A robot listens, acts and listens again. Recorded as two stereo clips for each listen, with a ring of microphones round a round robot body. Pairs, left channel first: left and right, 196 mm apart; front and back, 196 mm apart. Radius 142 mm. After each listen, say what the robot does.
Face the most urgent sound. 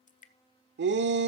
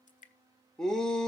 Turn 85° right.
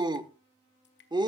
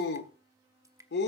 Turn 25° right.
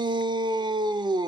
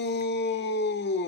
Turn 25° right.
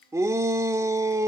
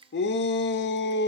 Turn 15° right.
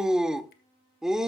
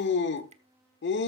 Facing the shout.